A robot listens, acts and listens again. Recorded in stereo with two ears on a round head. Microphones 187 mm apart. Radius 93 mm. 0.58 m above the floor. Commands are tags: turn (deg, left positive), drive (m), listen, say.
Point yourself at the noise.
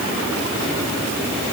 <listen/>
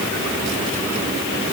<listen/>
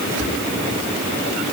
<turn deg="-65"/>
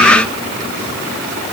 <listen/>
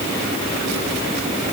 <listen/>
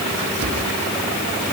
<turn deg="-50"/>
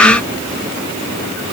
<listen/>
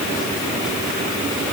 <listen/>
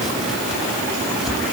<say>I heard chopping from this way, but can't make it out now.</say>